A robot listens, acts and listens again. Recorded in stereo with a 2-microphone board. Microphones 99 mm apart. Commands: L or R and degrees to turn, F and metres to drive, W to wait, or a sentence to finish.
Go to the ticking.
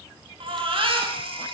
W
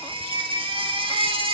W
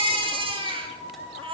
I can't make out ticking, only a baby crying and a flute.